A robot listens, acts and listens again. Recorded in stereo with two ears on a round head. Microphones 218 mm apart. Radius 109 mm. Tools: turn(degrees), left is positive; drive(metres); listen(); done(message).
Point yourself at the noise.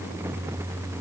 listen()
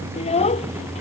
turn(degrees=25)
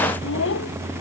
turn(degrees=125)
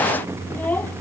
done("Found it: a child speaking, straight ahead.")